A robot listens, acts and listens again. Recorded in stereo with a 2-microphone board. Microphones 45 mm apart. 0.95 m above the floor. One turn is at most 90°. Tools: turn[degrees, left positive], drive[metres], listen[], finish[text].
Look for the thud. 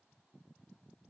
Action: listen[]
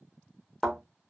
Action: turn[30]
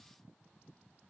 Action: listen[]
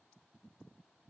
Action: finish[I heard a thud, but can't make it out now. It was about 25° right or 145° left.]